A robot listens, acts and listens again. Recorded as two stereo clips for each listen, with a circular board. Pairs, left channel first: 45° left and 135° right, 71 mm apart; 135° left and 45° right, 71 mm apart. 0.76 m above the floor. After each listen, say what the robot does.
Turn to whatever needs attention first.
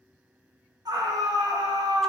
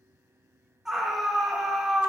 Turn 130° right.
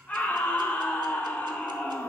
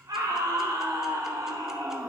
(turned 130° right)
Turn 25° right.
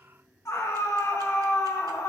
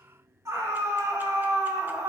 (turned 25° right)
Facing the scream.